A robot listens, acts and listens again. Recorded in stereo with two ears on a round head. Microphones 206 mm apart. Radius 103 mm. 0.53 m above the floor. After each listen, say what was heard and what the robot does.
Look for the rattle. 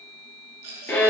The rattle: about 65° right or 115° right. Turn 65° right.
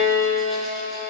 Keep listening.
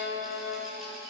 Keep listening.
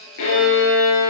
I heard a rattle, but can't make it out now. It was about straight ahead or 50° right.